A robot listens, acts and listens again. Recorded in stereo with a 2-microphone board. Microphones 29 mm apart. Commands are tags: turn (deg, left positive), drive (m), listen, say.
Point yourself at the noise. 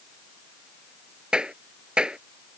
<turn deg="-30"/>
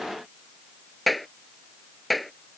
<say>Found it: a clap, straight ahead.</say>